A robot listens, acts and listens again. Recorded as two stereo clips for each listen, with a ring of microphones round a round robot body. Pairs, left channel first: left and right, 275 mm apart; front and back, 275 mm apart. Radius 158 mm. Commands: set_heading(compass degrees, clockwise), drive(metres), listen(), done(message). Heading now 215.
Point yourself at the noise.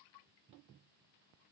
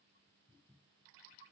listen()
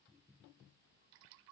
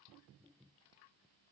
listen()
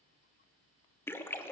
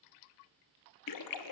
set_heading(205)
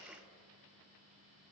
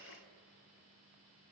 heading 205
done("Facing where the splash came from. I can't hear it now.")